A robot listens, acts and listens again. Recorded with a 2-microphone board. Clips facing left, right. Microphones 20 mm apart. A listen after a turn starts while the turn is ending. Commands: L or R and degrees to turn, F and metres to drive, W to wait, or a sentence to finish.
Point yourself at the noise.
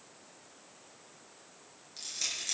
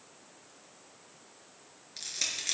R35
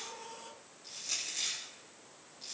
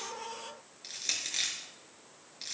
R110
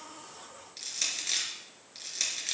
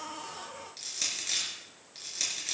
L15
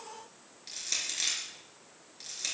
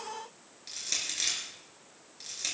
Found it: crushing, straight ahead.